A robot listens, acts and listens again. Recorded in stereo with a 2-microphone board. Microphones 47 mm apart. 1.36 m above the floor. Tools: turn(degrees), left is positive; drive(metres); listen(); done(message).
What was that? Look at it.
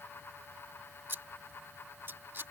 turn(degrees=-50)
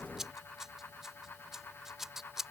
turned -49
turn(degrees=-10)
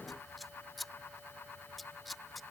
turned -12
done("Facing the scissors.")